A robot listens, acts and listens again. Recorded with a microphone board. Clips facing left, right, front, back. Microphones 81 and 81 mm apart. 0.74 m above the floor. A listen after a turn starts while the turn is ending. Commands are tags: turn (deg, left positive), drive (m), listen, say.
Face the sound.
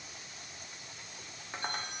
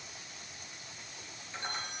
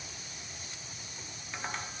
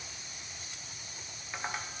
<turn deg="105"/>
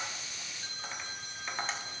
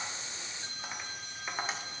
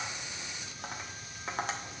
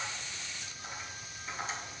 <turn deg="-10"/>
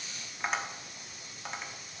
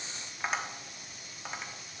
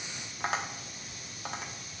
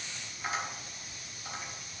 <say>Found it: tapping, straight ahead.</say>